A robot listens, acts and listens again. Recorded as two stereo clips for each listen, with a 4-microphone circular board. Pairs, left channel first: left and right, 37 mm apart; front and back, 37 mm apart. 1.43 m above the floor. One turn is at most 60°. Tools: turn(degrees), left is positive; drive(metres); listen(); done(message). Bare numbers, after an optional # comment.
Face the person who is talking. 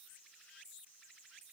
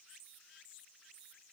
listen()
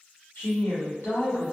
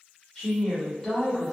# The woman speaking: 80° left.
turn(60)
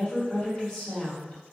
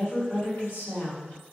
# The woman speaking is now 15° left.
turn(15)
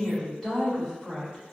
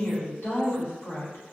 done("Found it: a woman speaking, straight ahead.")